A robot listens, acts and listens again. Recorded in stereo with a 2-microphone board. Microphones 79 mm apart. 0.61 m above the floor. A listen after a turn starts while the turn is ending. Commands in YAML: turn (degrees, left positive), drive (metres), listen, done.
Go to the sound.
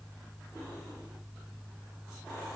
listen: true
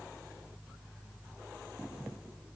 listen: true
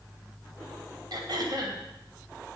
turn: -65
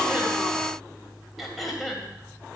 drive: 1.0
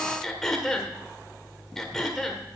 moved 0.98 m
drive: 1.0
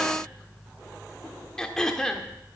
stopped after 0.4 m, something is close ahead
turn: 10
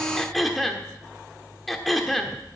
done: "I am next to the throat clearing."